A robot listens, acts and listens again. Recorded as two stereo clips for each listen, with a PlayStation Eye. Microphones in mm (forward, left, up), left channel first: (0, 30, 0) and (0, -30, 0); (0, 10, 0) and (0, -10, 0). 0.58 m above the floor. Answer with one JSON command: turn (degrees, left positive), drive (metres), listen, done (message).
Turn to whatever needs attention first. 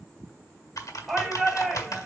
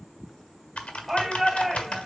{"turn": 30}
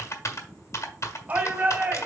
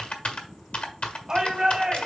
{"turn": -30}
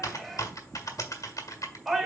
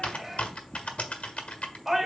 {"done": "Facing the shout, 2 to 4 m away."}